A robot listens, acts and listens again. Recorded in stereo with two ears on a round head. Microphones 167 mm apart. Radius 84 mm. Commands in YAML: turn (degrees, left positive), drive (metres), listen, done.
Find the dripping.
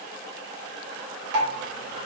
turn: -60
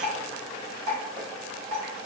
turn: -35
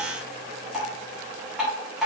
done: "Found it: dripping, straight ahead."